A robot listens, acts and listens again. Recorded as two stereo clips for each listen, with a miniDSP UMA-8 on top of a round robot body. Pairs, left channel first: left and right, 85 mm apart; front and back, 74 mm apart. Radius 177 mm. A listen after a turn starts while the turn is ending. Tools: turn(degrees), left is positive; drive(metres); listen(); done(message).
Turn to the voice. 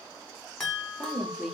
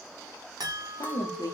done("Facing the woman speaking, 1 to 2 m away.")